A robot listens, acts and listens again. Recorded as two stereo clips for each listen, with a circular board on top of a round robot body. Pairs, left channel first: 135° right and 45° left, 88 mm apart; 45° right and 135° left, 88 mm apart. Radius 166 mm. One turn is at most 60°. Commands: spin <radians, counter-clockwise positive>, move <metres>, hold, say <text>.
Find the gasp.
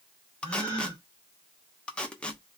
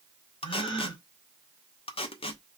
spin -0.17
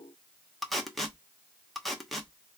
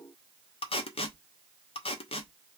say I heard a gasp from this way, but can't make it out now.